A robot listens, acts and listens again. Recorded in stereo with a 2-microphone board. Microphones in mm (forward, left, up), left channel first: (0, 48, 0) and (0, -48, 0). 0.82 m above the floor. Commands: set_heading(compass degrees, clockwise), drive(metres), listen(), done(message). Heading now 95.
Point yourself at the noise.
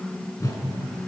set_heading(60)
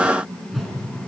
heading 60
done("Facing the whoosh.")